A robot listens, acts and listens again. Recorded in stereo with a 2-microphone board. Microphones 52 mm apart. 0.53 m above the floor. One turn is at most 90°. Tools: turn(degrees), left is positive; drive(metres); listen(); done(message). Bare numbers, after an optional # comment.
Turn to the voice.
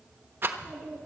# The child speaking: about 45° left or 135° left.
turn(45)
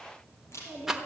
# So it is at 95° left.
turn(90)
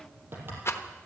# The child speaking is now 20° right.
turn(-20)
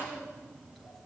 done("Facing the child speaking.")